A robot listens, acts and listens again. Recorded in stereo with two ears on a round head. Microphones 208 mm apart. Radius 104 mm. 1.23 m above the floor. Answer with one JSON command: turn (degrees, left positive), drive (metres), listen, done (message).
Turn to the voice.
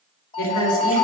{"turn": 65}
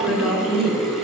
{"done": "Found it: a woman speaking, straight ahead, 2 to 4 m away."}